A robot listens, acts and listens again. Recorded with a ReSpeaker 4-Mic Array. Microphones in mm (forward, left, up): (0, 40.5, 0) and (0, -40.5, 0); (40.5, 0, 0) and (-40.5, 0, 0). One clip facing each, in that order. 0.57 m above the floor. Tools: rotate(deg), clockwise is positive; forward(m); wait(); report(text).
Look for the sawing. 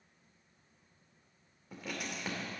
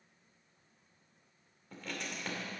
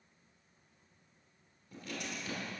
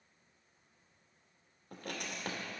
wait()
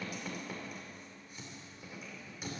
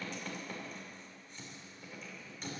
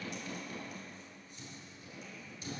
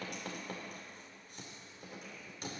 wait()
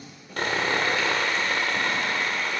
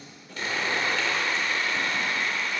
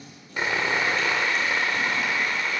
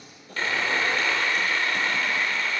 rotate(-75)
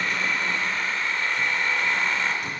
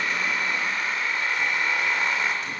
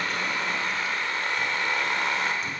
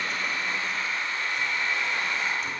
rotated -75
rotate(10)
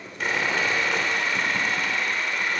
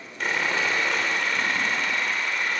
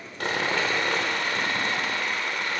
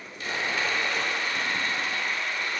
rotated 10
report("Found it: sawing, straight ahead.")